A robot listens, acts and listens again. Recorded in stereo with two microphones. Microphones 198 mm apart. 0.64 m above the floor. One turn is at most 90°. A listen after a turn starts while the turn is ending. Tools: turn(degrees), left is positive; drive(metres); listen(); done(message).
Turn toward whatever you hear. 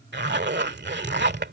turn(degrees=-60)
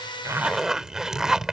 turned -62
done("Found it: a zipper, straight ahead.")